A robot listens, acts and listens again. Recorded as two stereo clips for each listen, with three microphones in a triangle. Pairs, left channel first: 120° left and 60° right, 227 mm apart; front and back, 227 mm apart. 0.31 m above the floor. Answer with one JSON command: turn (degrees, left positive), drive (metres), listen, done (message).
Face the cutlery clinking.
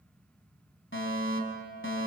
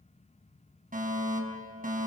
{"listen": true}
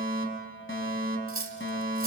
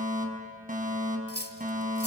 {"turn": -40}
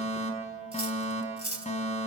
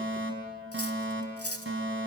{"done": "Found it: cutlery clinking, straight ahead."}